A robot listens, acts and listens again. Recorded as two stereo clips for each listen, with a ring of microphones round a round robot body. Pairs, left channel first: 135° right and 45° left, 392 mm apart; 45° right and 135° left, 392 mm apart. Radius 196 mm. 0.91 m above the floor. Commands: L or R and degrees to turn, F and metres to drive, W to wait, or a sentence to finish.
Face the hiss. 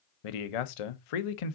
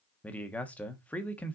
W
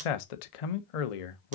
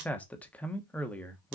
W
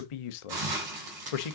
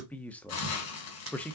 L10
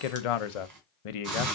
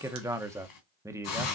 Found it: a hiss, straight ahead, 2 to 4 m away.